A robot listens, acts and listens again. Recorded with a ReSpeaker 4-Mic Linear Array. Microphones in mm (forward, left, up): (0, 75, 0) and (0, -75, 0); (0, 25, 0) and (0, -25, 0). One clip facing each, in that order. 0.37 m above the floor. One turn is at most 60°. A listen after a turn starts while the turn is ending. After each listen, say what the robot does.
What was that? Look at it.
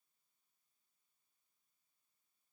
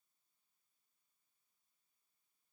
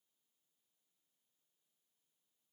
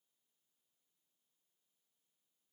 Keep listening.
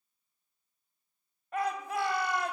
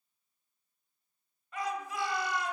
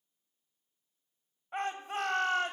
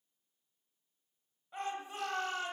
Turn 60° left.
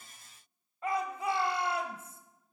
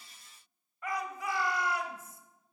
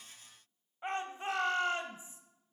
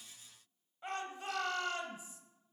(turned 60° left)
Turn 35° left.
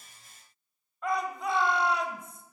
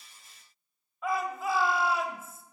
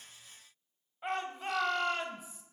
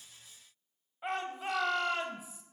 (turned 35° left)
Found it: a shout, straight ahead, 1 to 2 m away.